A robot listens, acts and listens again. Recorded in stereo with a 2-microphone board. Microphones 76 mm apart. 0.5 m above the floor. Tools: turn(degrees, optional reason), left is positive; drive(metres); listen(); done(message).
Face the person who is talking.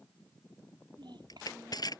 turn(degrees=-90)
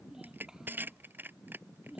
done("Found it: a child speaking, straight ahead.")